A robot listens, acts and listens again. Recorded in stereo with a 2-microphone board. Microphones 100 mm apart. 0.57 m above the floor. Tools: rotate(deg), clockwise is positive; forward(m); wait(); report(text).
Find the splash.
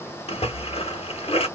rotate(-90)
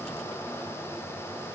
report("I heard a splash from this way, but can't make it out now.")